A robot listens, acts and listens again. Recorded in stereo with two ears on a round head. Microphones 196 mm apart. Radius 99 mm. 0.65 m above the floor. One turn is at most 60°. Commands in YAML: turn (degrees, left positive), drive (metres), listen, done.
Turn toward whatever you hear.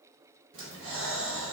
turn: -60
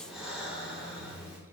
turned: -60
done: "Found it: breathing, straight ahead, under 1 m away."